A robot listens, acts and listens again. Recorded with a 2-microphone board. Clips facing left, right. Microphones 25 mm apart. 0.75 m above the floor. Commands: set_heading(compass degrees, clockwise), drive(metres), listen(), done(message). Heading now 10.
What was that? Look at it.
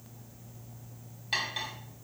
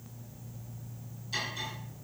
set_heading(280)
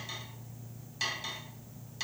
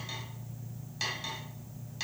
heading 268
done("Found it: cutlery clinking, straight ahead.")